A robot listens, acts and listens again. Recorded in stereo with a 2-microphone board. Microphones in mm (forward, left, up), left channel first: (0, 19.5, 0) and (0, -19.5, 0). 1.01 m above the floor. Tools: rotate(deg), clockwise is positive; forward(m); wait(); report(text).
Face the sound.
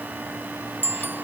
rotate(55)
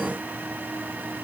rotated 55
wait()
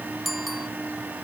report("Found it: a bicycle bell, straight ahead.")